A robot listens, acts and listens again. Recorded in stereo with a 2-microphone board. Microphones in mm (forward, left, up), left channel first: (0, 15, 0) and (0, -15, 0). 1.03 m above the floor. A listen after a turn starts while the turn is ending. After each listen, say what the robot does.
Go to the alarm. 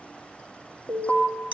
Turn 55° left.
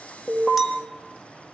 Drive 1.0 m forward.
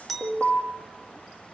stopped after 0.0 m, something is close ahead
Something is in my way. I am facing the alarm but have not reached it.